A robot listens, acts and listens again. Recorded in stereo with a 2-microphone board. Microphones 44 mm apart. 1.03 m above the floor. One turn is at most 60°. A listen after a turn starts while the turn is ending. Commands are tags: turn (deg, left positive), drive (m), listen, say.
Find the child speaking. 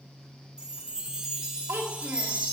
<turn deg="-60"/>
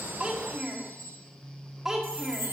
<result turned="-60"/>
<turn deg="-10"/>
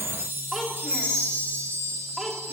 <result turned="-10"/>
<say>Found it: a child speaking, straight ahead.</say>